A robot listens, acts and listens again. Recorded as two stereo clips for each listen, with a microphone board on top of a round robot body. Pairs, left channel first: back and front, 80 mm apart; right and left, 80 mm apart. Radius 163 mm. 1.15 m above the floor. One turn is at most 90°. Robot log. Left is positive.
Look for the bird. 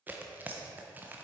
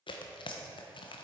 cmd idle
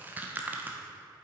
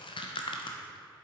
cmd idle
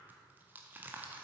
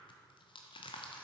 end: I can't make out a bird to turn to.